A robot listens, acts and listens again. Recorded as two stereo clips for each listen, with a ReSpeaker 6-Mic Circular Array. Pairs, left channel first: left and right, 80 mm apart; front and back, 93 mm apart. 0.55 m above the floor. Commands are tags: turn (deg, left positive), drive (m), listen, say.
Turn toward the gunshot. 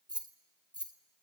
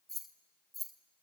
<listen/>
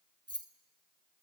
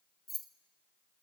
<listen/>
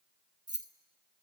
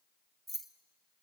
<say>I can't make out a gunshot to turn to.</say>